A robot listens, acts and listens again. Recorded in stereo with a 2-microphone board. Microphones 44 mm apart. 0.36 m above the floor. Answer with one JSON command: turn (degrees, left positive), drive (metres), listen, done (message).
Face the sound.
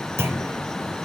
{"turn": -90}
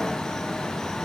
{"done": "Facing where the clunk came from. I can't hear it now."}